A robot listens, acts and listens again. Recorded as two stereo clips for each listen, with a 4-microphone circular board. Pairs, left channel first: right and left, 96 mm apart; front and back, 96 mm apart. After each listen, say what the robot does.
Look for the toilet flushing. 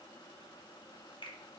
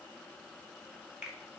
Keep listening.
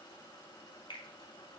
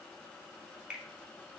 Keep listening.
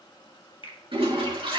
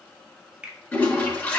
Turn 70° left.
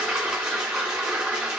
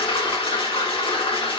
Turn 10° left.
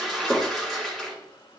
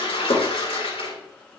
Facing the toilet flushing, 2 to 4 m away.